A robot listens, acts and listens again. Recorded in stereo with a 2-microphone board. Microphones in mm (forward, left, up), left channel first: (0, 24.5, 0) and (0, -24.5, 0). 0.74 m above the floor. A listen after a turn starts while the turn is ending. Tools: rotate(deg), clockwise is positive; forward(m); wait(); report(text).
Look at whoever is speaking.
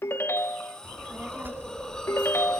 rotate(40)
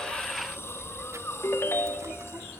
rotate(90)
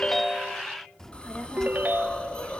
rotate(-10)
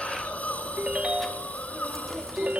report("Facing the child speaking.")